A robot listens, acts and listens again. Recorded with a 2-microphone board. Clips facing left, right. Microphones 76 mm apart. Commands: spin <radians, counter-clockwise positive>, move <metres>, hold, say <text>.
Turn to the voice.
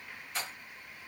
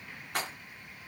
hold
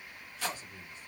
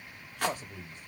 spin -1.13
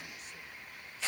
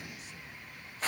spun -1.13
hold
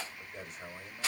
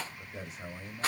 say Facing the man speaking.